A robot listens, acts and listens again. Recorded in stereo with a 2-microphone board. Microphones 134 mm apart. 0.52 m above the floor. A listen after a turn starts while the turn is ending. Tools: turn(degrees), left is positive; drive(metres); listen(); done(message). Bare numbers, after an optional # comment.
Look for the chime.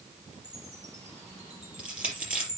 # The chime: about 55° right or 125° right.
turn(-55)
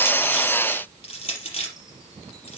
listen()
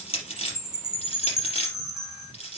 done("Facing the chime, over 4 m away.")